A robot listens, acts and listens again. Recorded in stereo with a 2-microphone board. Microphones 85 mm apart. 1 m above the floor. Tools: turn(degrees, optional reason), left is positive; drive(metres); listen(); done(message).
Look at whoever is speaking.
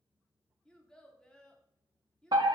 turn(degrees=30)
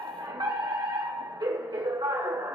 listen()
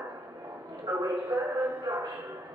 listen()
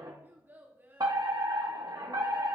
turn(degrees=-20, reason="So it is at 20° right.")
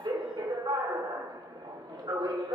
listen()
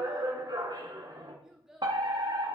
done("Facing the child speaking.")